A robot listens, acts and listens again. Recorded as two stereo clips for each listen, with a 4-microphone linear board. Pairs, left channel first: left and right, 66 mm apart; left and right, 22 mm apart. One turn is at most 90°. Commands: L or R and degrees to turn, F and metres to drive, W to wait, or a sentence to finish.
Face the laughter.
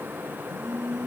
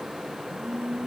W
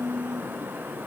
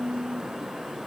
W
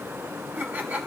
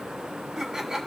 R25
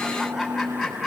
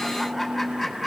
Found it: laughter, straight ahead, 2 to 4 m away.